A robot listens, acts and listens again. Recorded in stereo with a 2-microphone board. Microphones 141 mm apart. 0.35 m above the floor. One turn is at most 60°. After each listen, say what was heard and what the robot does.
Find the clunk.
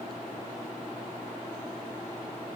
Keep listening.
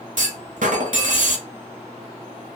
The clunk: about 65° right or 115° right. Turn 60° right.
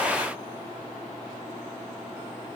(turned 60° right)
Keep listening.
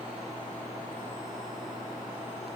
I heard a clunk, but can't make it out now. It was about 5° right or 55° right.